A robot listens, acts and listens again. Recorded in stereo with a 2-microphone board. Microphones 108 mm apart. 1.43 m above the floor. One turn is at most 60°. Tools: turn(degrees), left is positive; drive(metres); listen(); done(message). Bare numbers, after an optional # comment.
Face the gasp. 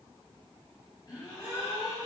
# The gasp: about 40° left or 140° left.
turn(40)
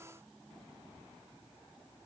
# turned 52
listen()
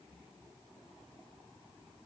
done("I heard a gasp, but can't make it out now. It was about 10° right or 85° left.")